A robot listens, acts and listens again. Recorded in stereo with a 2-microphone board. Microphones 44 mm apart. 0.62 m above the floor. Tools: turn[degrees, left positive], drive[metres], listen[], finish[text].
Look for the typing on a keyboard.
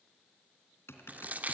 Thought: The typing on a keyboard: about 70° left or 110° left.
Action: turn[70]
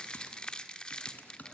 Thought: So it is at 40° left.
Action: turn[40]
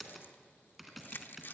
Action: finish[Facing the typing on a keyboard.]